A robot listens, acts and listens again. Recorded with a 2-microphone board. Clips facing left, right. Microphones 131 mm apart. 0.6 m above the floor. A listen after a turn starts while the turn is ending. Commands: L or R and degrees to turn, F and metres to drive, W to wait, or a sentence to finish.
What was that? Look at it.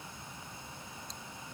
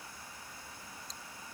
W
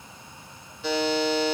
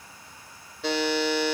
R70
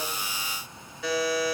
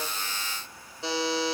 R30
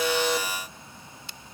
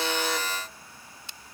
W
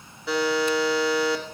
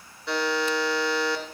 Facing the buzzer, 1 to 2 m away.